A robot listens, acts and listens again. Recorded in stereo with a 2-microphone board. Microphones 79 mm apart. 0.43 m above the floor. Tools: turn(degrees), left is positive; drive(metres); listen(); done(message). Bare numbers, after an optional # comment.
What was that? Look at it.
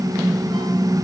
listen()
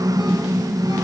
listen()
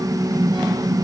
done("I can't make out anything.")